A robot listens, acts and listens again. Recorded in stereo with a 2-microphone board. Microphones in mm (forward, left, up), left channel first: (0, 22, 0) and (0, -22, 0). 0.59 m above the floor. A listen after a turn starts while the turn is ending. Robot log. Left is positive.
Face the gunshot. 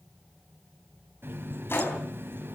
note: The gunshot: about 60° left or 120° left.
cmd yaw +60
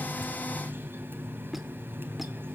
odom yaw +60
cmd idle
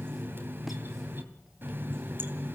end: I heard a gunshot, but can't make it out now. It was about straight ahead or 60° left.